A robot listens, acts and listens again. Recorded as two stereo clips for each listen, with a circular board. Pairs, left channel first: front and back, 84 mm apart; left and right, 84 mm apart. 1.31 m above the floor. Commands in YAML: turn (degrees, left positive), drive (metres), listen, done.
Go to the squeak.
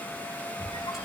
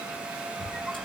drive: 1.0
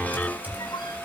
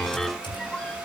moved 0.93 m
turn: 15
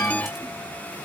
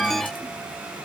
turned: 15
listen: true
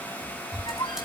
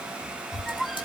drive: 1.0
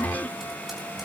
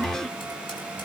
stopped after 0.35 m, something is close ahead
listen: true
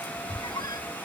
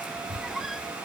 done: "Arrived at the squeak, straight ahead."